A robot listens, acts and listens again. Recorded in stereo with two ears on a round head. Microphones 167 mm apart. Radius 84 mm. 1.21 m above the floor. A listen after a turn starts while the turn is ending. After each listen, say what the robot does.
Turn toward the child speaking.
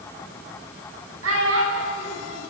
Turn 90° right.
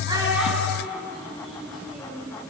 Facing the child speaking.